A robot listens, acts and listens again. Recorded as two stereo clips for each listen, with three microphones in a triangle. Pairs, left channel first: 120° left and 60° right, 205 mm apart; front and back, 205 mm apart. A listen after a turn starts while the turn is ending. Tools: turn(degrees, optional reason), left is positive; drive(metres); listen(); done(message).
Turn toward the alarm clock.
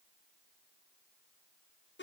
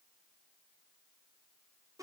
listen()
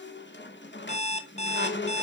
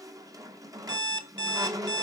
turn(degrees=170, reason="The alarm clock: 170° left.")
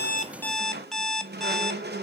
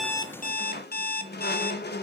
turn(degrees=30, reason="The alarm clock is now 30° left.")
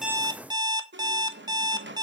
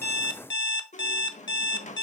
turn(degrees=10, reason="The alarm clock is now 10° left.")
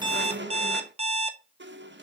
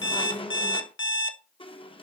done("Facing the alarm clock, under 1 m away.")